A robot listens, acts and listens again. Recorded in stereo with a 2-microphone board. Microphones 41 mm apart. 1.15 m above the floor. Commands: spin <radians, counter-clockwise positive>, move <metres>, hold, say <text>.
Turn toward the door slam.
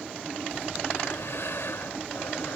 hold
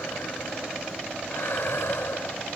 hold
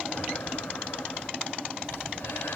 say I can't make out a door slam to turn to.